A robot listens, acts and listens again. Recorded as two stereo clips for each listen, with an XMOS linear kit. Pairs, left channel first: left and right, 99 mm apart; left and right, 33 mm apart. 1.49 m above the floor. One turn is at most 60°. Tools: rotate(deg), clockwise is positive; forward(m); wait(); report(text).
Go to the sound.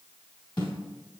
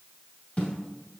rotate(-50)
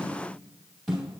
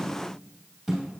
forward(1.0)
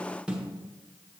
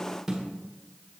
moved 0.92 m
rotate(10)
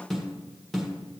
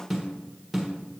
forward(1.0)
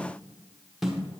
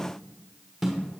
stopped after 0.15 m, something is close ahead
report("I am next to the snare drum.")